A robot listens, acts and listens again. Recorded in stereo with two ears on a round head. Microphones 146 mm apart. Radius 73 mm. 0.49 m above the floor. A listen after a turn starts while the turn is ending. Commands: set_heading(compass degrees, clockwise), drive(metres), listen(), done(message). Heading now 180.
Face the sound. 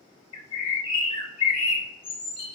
set_heading(145)
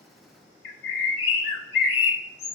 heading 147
set_heading(32)
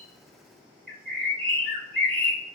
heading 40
done("Facing the bird, under 1 m away.")